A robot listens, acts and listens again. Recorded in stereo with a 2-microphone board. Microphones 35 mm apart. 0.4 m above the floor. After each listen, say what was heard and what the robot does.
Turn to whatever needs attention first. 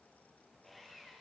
Keep listening.
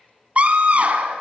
The scream: about 45° right or 135° right. Turn 45° right.
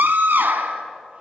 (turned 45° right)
So it is at 85° right. Turn 85° right.
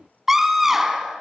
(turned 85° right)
The scream is now 10° right. Turn 10° right.
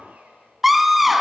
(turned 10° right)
Found it: a scream, straight ahead, 2 to 4 m away.